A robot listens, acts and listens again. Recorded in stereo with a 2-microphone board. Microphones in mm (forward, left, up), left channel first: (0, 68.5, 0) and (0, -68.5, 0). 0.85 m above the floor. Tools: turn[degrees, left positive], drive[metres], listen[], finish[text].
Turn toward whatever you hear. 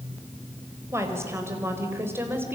Thought: The woman speaking: about 15° right or 165° right.
Action: turn[-15]
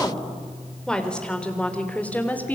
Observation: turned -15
Thought: So it is at 15° left.
Action: turn[15]
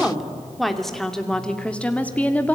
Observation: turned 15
Thought: The woman speaking is now 10° left.
Action: turn[10]
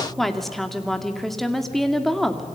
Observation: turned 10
Action: finish[Facing the woman speaking, 2 to 4 m away.]